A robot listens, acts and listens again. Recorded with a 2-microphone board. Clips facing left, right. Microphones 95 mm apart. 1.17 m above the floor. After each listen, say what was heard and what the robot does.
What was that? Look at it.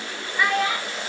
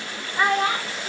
The child speaking: about 35° right or 145° right. Turn 35° right.
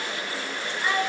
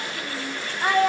So it is at 125° right. Turn 125° right.
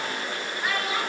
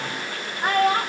The child speaking is now 50° right. Turn 50° right.
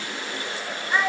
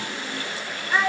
Facing the child speaking.